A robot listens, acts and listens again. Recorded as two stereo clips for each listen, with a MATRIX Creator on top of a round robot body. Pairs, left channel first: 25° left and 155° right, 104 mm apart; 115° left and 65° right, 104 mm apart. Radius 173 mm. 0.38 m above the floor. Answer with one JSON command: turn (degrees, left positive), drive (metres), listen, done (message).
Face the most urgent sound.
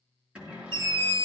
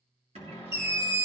{"turn": -125}
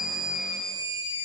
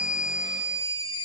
{"turn": 40}
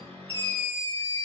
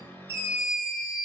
{"done": "Found it: a scream, straight ahead."}